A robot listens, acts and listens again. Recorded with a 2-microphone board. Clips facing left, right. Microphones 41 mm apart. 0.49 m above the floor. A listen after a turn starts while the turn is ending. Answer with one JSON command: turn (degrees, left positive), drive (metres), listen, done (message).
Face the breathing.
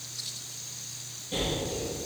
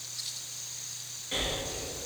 {"turn": -70}
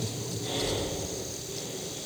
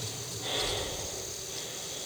{"turn": -40}
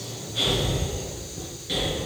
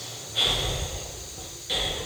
{"done": "Found it: breathing, straight ahead, 2 to 4 m away."}